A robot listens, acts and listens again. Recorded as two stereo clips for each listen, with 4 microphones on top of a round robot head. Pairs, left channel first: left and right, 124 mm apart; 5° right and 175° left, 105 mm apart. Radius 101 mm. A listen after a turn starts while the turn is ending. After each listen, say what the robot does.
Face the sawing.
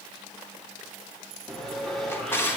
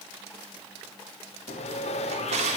Facing the sawing.